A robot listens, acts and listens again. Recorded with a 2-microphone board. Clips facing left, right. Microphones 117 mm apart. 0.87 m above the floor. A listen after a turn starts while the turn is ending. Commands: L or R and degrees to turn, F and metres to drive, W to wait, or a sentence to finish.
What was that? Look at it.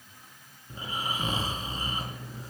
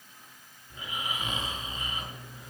L35
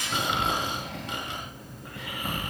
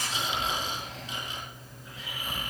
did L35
L110
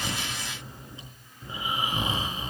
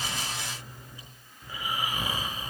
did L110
L25
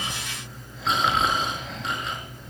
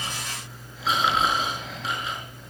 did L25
Found it: snoring, straight ahead, over 4 m away.